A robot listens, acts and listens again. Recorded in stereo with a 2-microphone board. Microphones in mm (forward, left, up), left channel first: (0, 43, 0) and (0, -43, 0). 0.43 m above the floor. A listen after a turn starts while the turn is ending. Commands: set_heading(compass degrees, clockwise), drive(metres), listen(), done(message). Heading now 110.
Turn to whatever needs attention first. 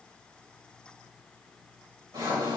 listen()
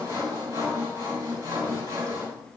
listen()
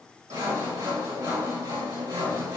done("I can't make out anything urgent to turn to.")